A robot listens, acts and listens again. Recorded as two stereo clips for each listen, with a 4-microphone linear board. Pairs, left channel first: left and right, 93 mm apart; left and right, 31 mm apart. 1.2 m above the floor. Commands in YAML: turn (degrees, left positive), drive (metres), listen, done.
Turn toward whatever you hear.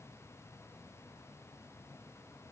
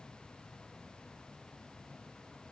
listen: true
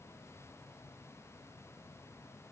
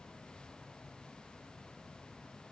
listen: true
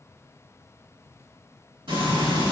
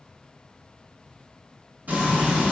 turn: -60
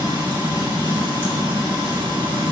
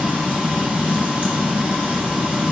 turn: -60
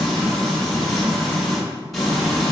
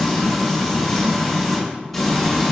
done: "Facing the frying."